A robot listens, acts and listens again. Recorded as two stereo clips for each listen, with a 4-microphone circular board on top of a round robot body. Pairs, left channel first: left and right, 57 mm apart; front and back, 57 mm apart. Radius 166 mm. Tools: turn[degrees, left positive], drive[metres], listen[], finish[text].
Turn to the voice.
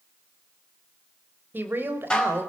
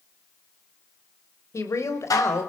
Thought: The woman speaking: 35° right.
Action: turn[-35]
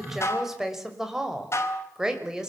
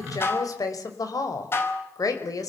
Thought: The woman speaking is now 10° right.
Action: turn[-10]
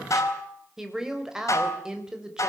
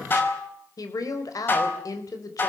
Thought: The woman speaking is now 10° right.
Action: turn[-10]
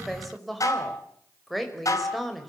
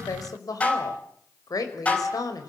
Action: finish[Found it: a woman speaking, straight ahead.]